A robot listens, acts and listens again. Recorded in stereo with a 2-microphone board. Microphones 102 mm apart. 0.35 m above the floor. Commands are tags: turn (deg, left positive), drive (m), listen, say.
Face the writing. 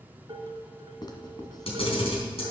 <turn deg="45"/>
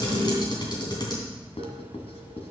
<turn deg="90"/>
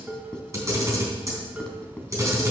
<turn deg="10"/>
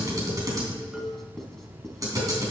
<say>Found it: writing, straight ahead.</say>